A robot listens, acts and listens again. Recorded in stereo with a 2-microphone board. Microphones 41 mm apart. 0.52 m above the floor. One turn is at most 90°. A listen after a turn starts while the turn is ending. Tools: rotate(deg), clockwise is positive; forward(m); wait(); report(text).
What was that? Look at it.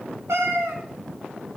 rotate(90)
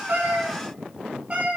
rotate(30)
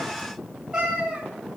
rotate(20)
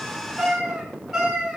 rotate(10)
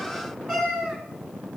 report("Facing the cat meowing.")